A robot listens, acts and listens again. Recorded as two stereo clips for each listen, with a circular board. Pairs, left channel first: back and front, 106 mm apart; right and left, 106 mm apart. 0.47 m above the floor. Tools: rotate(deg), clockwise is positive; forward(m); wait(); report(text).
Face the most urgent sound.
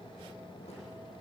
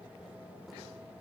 wait()
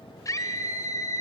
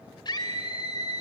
rotate(130)
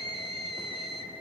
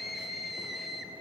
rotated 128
report("Found it: a scream, straight ahead.")